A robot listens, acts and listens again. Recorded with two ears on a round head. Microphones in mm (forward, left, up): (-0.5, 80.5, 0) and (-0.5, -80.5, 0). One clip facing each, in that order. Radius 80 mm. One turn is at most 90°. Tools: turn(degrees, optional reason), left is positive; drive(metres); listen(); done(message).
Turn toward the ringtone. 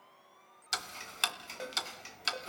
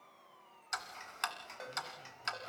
turn(degrees=35, reason="The ringtone: about 35° left or 145° left.")
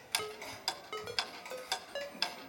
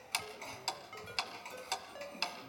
turn(degrees=90, reason="So it is at 110° left.")
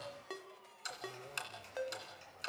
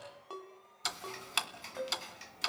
turn(degrees=20, reason="The ringtone is now 20° left.")
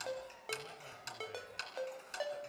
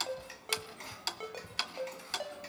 done("Found it: a ringtone, straight ahead, 1 to 2 m away.")